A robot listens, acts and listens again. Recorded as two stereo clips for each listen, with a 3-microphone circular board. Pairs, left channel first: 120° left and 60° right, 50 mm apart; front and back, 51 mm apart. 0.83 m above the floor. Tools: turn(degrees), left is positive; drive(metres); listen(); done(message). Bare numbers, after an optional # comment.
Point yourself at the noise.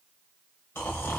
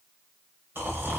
# The snoring: 145° left.
turn(145)
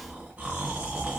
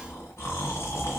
done("Facing the snoring, under 1 m away.")